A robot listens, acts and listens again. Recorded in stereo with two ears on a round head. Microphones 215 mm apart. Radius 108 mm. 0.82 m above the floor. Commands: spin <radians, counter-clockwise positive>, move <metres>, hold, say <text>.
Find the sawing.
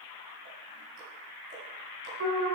hold
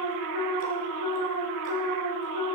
hold
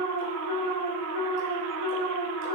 say I can't make out sawing to turn to.